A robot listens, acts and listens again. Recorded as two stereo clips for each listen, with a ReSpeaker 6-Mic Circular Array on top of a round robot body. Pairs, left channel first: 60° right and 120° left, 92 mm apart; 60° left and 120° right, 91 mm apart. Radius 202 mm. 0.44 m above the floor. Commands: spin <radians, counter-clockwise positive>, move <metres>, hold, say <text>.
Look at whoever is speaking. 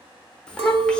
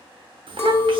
spin -2.44
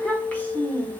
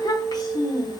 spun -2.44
spin 0.26
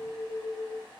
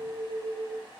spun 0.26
hold
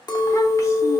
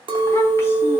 hold
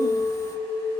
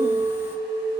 say I heard a child speaking from this way, but can't make it out now.